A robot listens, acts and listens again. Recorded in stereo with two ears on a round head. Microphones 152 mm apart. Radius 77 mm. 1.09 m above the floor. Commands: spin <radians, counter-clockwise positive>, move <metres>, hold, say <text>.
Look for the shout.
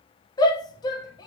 spin 0.44
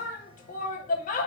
spin 2.27
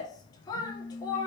spin 0.35
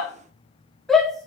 say Facing the shout.